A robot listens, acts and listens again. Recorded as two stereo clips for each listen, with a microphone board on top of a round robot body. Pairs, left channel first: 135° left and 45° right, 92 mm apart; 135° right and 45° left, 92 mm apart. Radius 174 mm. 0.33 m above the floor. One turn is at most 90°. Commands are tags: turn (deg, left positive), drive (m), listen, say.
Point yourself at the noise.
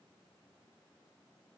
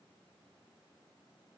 <listen/>
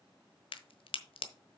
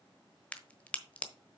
<turn deg="90"/>
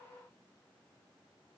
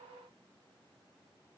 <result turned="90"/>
<turn deg="60"/>
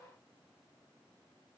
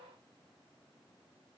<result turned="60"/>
<say>Facing where the crack came from. I can't hear it now.</say>